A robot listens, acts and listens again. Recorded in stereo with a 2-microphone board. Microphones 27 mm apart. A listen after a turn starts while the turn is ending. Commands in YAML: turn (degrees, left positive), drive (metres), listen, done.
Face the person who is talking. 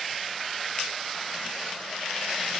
listen: true
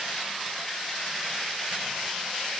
listen: true
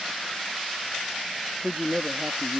turn: -75
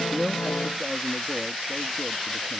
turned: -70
listen: true
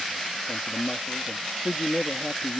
turn: -35
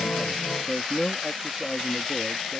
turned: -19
turn: -15
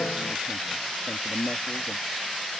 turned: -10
done: "Facing the man speaking."